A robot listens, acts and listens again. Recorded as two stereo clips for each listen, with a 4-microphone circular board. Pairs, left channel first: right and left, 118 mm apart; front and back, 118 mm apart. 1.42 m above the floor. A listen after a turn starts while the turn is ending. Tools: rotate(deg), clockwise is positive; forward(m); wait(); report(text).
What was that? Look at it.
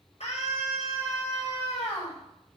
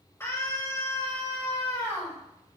rotate(70)
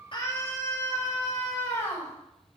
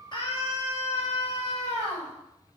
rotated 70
rotate(25)
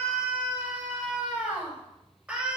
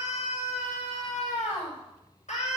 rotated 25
rotate(-10)
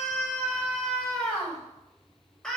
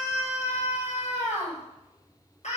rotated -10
report("Facing the scream, over 4 m away.")